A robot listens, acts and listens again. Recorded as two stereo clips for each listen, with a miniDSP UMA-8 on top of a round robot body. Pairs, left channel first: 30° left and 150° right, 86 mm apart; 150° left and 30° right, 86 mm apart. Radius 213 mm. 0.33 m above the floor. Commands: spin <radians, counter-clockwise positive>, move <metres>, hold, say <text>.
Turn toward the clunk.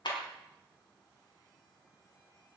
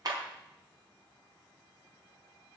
hold
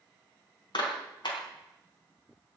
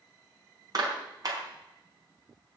hold
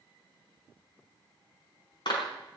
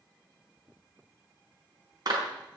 say I can't make out a clunk, only a clap.